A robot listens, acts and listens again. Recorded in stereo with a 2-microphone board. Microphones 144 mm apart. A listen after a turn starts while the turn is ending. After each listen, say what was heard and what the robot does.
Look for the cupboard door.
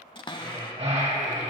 The cupboard door: about 35° left or 145° left. Turn 35° left.
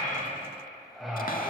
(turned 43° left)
Keep listening.
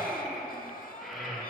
Keep listening.
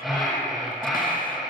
I heard a cupboard door, but can't make it out now. It was about 10° right or 105° left.